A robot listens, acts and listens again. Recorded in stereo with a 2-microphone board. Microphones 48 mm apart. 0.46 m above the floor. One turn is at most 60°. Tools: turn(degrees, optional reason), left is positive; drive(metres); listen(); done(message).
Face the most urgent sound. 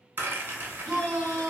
turn(degrees=30)
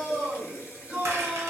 turn(degrees=-20, reason="So it is at 20° right.")
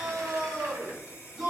done("Facing the shout.")